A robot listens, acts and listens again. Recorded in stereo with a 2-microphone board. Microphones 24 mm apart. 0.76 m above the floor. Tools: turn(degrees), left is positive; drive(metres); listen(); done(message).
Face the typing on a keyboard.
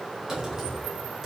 turn(degrees=-20)
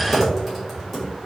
done("Found it: typing on a keyboard, straight ahead, 1 to 2 m away.")